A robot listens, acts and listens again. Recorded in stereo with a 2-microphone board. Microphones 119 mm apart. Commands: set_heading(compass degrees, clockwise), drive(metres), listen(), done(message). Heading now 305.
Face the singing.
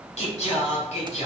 set_heading(235)
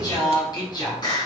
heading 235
set_heading(200)
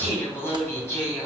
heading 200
set_heading(180)
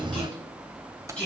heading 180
set_heading(170)
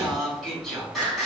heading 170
done("Found it: singing, straight ahead.")